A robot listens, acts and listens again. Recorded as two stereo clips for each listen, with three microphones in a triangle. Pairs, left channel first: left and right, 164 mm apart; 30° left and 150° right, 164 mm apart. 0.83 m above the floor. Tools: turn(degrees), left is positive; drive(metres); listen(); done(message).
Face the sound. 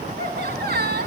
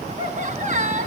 turn(degrees=-110)
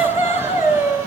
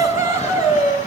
turn(degrees=-15)
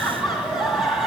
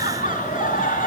done("Facing the laughter, over 4 m away.")